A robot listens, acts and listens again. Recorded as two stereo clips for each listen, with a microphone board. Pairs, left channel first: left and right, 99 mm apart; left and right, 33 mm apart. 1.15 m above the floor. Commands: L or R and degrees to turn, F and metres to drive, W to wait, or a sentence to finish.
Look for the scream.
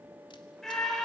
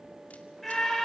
L30
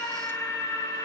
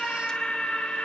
L145
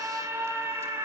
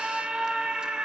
R30
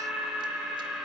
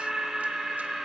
Facing the scream.